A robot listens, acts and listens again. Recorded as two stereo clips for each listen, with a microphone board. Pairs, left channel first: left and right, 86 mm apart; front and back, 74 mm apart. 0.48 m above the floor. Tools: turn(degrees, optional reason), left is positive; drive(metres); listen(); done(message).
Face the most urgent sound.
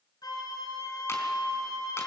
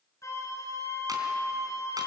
listen()
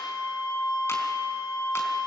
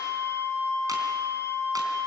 listen()
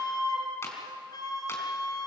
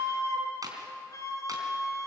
done("I can't make out anything urgent to turn to.")